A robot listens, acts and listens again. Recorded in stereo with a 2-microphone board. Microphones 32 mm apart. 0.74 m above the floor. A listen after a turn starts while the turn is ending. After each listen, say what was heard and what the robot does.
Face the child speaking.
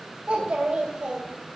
The child speaking: about 25° right or 155° right. Turn 25° right.
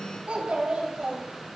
So it is at 135° right. Turn 135° right.
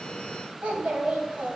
The child speaking is now 60° right. Turn 60° right.
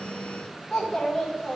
Found it: a child speaking, straight ahead.